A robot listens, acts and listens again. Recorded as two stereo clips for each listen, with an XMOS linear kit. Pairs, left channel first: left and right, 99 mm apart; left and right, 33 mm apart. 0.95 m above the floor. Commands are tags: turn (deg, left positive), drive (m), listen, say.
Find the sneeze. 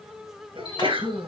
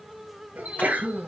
<turn deg="-65"/>
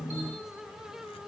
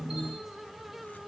<listen/>
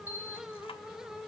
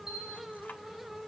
<say>I heard a sneeze, but can't make it out now. It was about straight ahead or 50° right.</say>